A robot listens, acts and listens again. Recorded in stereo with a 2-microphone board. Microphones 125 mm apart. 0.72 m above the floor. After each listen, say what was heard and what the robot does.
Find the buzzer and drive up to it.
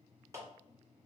Keep listening.
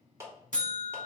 The buzzer: about 75° left or 105° left. Turn 75° left.
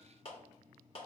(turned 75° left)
Keep listening.
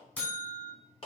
So it is at 10° left. Turn 10° left.
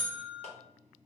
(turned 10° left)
Drive 1.0 m forward.
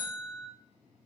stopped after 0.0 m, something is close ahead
Blocked. The buzzer is further on, straight ahead.